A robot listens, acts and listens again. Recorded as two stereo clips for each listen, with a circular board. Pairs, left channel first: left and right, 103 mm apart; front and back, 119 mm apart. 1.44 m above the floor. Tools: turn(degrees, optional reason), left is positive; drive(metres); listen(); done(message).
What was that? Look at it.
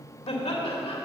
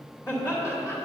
turn(degrees=65, reason="The laughter: 65° left.")
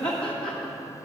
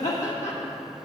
turn(degrees=10, reason="The laughter is now 10° left.")
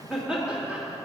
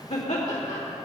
turn(degrees=-10, reason="The laughter is now 10° right.")
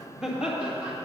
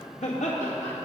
turn(degrees=-10, reason="The laughter is now 10° right.")
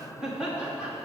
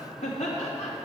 turn(degrees=-10, reason="The laughter is now 10° right.")
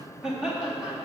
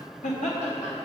turn(degrees=-10, reason="The laughter is now 10° right.")
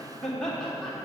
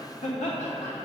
done("Found it: laughter, straight ahead.")